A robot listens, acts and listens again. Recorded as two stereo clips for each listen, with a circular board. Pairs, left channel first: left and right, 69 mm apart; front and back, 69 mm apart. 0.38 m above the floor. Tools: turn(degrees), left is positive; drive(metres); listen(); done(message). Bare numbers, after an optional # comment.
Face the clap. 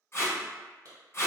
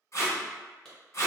# The clap: 80° right.
turn(-80)
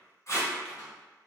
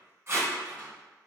listen()
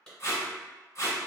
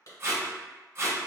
# The clap is now 15° left.
turn(15)
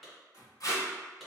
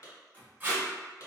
done("Facing the clap.")